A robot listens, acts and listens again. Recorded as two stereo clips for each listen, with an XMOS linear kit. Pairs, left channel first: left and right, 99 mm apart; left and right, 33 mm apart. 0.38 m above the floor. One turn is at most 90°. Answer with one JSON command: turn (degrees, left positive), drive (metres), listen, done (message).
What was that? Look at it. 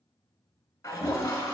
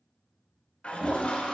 {"turn": 30}
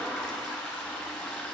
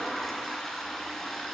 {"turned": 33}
{"done": "Facing the toilet flushing, 1 to 2 m away."}